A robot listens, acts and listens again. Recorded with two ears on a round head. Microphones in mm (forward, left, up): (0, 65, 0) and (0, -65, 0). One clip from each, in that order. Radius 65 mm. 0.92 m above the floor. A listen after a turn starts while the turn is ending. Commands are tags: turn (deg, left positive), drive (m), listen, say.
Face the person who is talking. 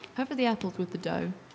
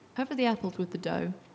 <turn deg="30"/>
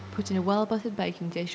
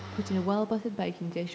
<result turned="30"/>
<turn deg="145"/>
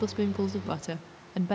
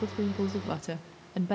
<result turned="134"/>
<turn deg="10"/>
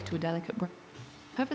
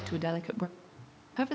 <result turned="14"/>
<say>Found it: a woman speaking, straight ahead, under 1 m away.</say>